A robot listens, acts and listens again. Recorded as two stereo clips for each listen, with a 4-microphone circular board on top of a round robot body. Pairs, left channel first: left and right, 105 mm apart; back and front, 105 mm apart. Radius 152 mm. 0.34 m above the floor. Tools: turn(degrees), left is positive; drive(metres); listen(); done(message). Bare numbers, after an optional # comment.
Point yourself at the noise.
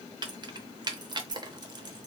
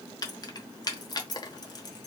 # The keys jangling: 135° right.
turn(-135)
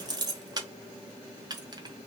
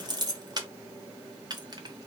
# The keys jangling is now 45° right.
turn(-45)
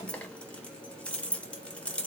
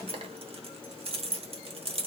# The keys jangling is now 10° left.
turn(10)
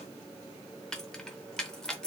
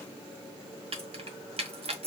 done("Facing the keys jangling.")